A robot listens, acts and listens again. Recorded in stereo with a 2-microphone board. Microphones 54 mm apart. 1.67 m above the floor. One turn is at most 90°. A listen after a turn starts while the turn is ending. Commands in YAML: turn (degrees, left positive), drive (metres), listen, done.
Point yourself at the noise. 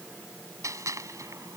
turn: -70
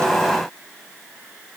listen: true
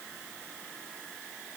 done: "I heard a gunshot, but can't make it out now. It was about straight ahead or 40° right."